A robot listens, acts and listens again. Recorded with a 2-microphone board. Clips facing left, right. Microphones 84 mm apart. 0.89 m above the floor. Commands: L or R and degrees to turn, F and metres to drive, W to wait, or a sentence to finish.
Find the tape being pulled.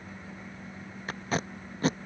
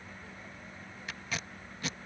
L40
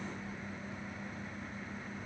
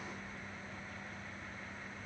W
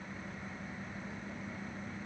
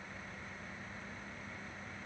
W
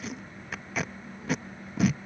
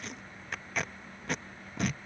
Found it: tape being pulled, straight ahead.